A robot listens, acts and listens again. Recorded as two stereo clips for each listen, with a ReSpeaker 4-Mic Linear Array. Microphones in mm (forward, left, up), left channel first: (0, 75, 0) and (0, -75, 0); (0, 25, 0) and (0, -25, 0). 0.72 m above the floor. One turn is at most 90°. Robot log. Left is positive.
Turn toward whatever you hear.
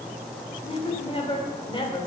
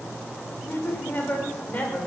note: The woman speaking: about 30° left or 150° left.
cmd yaw +30
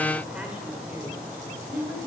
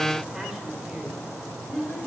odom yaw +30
note: So it is at 15° right.
cmd yaw -15
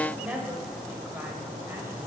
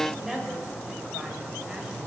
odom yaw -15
note: The woman speaking is now 10° right.
cmd yaw -10
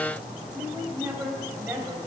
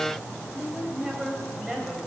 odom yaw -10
note: The woman speaking is now 15° right.
cmd yaw -15
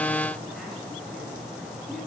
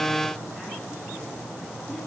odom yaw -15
cmd idle
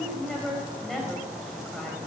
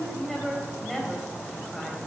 end: Found it: a woman speaking, straight ahead.